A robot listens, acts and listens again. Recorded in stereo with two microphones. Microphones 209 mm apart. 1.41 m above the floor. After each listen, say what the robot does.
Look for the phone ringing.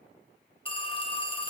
Turn 25° left.
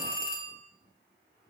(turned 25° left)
Turn 125° left.
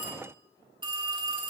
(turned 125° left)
Turn 25° right.
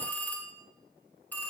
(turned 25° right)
Turn 10° left.
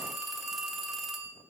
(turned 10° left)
Found it: a phone ringing, straight ahead.